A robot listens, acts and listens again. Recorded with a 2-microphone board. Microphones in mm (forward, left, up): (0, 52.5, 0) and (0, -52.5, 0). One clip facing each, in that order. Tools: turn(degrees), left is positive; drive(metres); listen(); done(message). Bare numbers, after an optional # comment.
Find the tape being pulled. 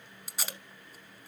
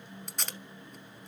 turn(30)
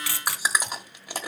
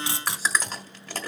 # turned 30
# So it is at 25° right.
turn(-25)
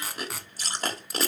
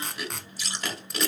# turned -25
done("Facing the tape being pulled.")